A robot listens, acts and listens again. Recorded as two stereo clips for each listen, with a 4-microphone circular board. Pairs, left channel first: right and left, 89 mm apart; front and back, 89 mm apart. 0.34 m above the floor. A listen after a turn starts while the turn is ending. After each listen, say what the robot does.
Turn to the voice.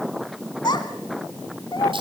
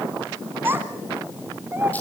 Turn 115° right.
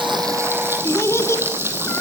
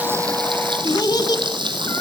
Turn 35° right.
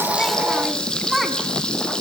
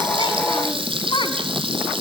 Facing the child speaking.